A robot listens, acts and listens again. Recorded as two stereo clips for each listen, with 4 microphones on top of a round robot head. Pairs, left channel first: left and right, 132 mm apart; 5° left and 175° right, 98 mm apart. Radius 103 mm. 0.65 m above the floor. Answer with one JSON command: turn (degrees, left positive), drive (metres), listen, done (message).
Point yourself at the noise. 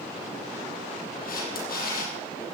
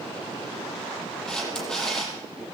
{"turn": 85}
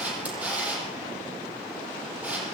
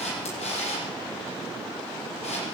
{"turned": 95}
{"turn": -10}
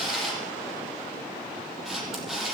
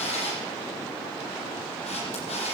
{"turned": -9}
{"done": "Facing the camera shutter, over 4 m away."}